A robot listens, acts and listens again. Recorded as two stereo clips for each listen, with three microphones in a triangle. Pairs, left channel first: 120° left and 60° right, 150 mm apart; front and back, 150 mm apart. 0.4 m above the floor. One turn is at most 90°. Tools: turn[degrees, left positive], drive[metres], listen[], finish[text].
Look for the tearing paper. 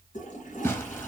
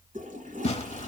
Thought: The tearing paper: 45° left.
Action: turn[45]
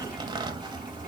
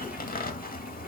Action: finish[Facing the tearing paper.]